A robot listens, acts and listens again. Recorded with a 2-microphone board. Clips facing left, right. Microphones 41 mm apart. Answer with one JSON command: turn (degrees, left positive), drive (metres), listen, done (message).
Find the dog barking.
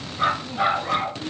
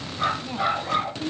{"turn": 20}
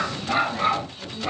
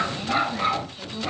{"turn": 30}
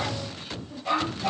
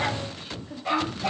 {"turn": -15}
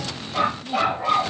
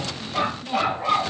{"done": "Facing the dog barking."}